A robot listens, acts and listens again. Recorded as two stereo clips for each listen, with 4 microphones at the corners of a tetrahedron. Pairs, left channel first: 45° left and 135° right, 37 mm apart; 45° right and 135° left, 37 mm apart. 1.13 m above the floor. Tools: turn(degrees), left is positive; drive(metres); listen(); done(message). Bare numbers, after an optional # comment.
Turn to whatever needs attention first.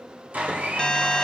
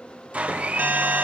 # The alarm: 115° left.
turn(115)
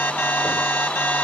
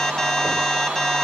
# The alarm is now 30° left.
turn(30)
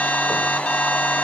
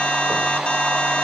done("Found it: an alarm, straight ahead, under 1 m away.")